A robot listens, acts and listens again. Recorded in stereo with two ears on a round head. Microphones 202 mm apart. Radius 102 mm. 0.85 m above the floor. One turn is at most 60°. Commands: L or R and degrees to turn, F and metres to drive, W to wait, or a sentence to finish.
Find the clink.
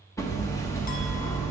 W
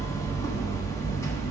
W
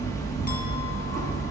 I can't make out a clink, only hammering.